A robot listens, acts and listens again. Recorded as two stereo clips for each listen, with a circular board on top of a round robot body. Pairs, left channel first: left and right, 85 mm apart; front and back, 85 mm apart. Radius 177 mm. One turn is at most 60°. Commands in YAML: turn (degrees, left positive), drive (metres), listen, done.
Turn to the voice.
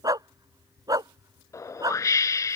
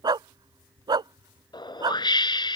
listen: true
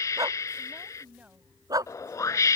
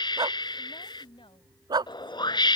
turn: -15
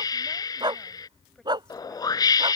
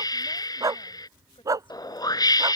listen: true
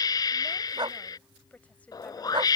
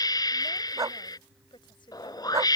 turn: 15
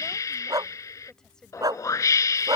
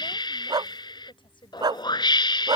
done: "Facing the woman speaking."